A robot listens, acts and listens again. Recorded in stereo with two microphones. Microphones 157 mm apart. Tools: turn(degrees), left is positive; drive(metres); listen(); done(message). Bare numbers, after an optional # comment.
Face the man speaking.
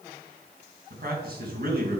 # The man speaking: about 70° right or 110° right.
turn(-70)
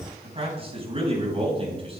# So it is at 35° right.
turn(-35)
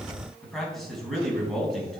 done("Facing the man speaking.")